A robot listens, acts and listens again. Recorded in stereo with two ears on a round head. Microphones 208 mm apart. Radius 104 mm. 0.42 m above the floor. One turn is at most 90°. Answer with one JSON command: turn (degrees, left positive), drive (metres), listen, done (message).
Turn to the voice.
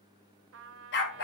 {"listen": true}
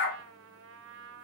{"listen": true}
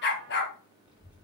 {"turn": -30}
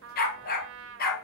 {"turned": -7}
{"listen": true}
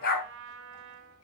{"listen": true}
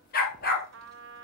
{"turn": 30}
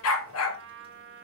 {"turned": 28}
{"listen": true}
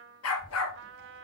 {"turn": -25}
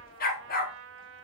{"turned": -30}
{"listen": true}
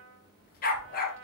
{"done": "Found it: a child speaking, straight ahead, 2 to 4 m away."}